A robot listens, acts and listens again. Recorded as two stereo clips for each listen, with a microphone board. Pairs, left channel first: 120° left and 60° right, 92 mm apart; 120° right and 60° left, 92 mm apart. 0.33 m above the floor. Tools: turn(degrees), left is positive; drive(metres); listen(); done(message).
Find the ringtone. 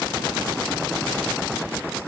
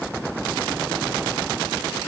listen()
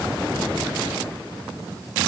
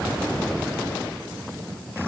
listen()
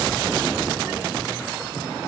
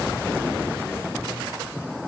done("I can't make out a ringtone to turn to.")